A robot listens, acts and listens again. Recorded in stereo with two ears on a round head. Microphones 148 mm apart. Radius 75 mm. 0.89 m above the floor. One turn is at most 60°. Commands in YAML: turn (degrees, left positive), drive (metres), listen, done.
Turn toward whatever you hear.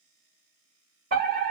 turn: -50
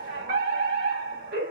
turn: -60
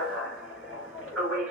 done: "Found it: a fire alarm, straight ahead."